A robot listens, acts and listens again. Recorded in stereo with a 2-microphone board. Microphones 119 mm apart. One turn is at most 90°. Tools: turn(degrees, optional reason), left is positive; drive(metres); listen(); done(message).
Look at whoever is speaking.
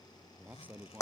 turn(degrees=-30)
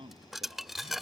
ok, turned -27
turn(degrees=-90, reason="So it is at 135° right.")
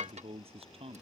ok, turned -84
turn(degrees=-50, reason="The man speaking is now 50° right.")
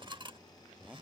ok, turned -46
listen()
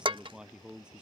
done("Facing the man speaking.")